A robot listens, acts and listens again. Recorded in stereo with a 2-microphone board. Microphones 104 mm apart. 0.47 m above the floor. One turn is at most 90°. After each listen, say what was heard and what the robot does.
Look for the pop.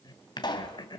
The pop: about 45° left or 135° left. Turn 45° left.
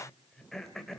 Keep listening.
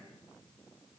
I heard a pop, but can't make it out now. It was about straight ahead or 90° left.